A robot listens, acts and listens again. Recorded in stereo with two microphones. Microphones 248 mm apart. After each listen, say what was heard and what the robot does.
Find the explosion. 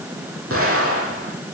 The explosion: about 60° right or 120° right. Turn 60° right.
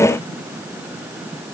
Keep listening.
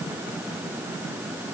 I heard an explosion, but can't make it out now. It was about straight ahead or 60° right.